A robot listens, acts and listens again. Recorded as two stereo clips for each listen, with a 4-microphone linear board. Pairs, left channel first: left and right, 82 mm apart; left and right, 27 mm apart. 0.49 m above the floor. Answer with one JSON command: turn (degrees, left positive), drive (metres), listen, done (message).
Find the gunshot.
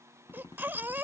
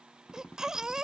{"turn": 60}
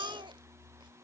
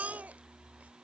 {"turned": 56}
{"listen": true}
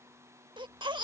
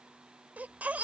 {"done": "I heard a gunshot, but can't make it out now. It was about 5° left or 65° left."}